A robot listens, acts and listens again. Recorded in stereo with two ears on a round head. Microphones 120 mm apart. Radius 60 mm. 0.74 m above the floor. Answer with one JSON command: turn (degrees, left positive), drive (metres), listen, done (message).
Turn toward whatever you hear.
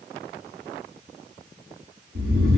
{"turn": -90}
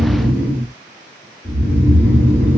{"done": "Facing the snoring."}